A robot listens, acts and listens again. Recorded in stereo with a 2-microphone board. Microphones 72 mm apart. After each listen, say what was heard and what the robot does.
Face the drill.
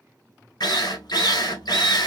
Turn 90° left.
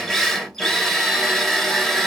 Facing the drill.